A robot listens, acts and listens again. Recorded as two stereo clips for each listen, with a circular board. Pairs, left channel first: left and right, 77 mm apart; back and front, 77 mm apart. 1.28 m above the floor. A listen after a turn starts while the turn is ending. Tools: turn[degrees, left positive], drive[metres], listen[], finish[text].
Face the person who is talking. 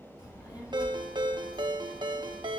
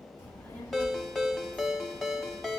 Thought: The child speaking: 115° left.
Action: turn[115]
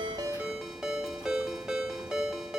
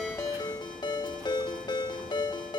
Thought: The child speaking is now 35° left.
Action: turn[35]
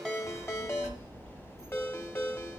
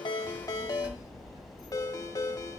Action: finish[Facing the child speaking, over 4 m away.]